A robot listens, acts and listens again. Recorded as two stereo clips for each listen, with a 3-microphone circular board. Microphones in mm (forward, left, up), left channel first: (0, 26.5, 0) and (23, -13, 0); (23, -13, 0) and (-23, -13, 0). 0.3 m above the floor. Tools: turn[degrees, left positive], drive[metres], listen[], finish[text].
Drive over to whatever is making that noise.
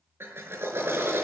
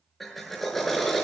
Thought: The drill: 85° right.
Action: turn[-85]
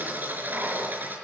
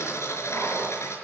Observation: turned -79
Thought: The drill is now 10° right.
Action: turn[-10]
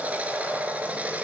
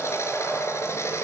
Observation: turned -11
Action: drive[1.0]
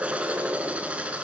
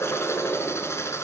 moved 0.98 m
Action: drive[1.0]
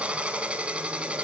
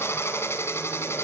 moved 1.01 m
Action: drive[1.0]
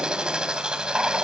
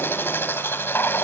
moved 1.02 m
Thought: The drill is now 10° left.
Action: turn[10]
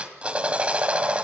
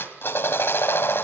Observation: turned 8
Action: drive[1.0]
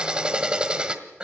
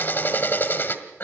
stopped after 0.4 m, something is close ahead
Action: finish[I am next to the drill.]